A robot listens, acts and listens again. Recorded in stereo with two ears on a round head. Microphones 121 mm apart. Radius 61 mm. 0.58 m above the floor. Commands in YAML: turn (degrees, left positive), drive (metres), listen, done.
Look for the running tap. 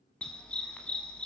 listen: true
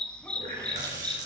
turn: -60
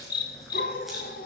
listen: true
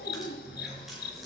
done: "Found it: a running tap, straight ahead, over 4 m away."